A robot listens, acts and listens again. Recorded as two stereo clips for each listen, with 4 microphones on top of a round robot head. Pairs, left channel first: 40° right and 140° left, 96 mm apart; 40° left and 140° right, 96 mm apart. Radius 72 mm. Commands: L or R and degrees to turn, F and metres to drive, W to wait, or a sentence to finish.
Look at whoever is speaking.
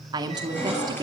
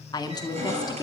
L90
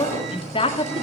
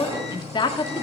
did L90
Found it: a woman speaking, straight ahead.